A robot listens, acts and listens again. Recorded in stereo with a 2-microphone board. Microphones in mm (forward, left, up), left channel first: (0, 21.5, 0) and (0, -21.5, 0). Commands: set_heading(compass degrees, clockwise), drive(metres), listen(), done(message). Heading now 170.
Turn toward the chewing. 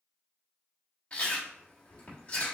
set_heading(140)
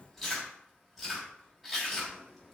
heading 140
done("Facing the chewing, 1 to 2 m away.")